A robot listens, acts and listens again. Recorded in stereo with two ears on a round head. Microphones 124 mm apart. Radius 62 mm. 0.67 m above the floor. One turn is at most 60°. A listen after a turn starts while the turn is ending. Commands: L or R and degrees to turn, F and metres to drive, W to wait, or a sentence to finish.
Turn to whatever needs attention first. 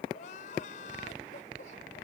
L60
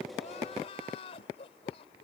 L45
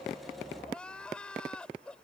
Facing the crying.